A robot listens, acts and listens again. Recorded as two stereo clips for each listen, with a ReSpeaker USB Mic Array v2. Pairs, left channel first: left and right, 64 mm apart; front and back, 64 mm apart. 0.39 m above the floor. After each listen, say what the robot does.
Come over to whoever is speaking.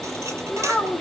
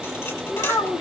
Turn 15° left.
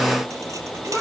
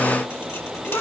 Keep listening.
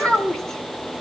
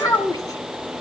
Turn 10° left.
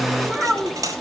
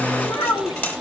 Drive 1.0 m forward.
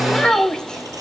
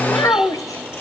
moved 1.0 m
Turn 15° left.
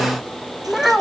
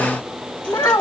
Drive 1.0 m forward.
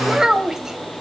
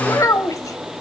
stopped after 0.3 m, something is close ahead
I am next to the child speaking.